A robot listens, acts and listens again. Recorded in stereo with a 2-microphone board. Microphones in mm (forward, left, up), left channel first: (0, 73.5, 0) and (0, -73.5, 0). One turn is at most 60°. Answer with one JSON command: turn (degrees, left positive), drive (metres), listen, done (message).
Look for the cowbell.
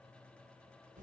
{"listen": true}
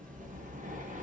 {"listen": true}
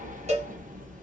{"turn": -50}
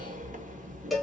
{"done": "Facing the cowbell."}